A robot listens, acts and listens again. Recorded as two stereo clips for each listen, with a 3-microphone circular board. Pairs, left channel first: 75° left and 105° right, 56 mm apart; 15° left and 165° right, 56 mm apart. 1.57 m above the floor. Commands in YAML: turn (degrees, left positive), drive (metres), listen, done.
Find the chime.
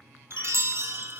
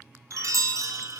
turn: -145
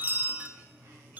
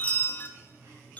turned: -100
turn: -45
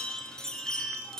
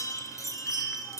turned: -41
done: "Facing the chime, under 1 m away."